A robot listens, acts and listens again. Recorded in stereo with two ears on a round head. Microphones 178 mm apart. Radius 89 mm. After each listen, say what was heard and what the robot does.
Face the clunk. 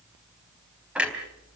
Turn 30° right.
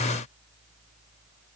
Keep listening.
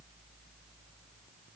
I heard a clunk, but can't make it out now. It was about 25° left or 145° right.